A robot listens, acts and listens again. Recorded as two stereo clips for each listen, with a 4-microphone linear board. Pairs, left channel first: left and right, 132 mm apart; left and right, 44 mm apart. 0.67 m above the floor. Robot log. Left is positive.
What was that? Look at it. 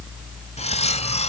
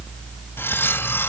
note: The cutlery clinking: about 55° left or 125° left.
cmd yaw +55
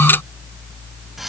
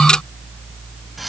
cmd idle
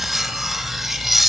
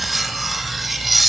end: Facing the cutlery clinking, 2 to 4 m away.